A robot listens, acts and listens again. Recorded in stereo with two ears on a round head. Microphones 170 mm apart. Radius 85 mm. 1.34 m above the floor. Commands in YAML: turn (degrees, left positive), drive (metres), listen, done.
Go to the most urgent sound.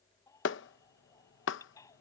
turn: 20
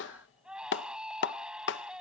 drive: 1.0
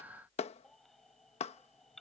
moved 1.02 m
drive: 1.0
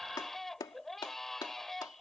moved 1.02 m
drive: 1.0
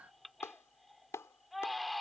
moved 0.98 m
drive: 1.0
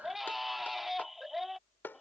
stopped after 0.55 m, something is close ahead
done: "I am next to the baby crying."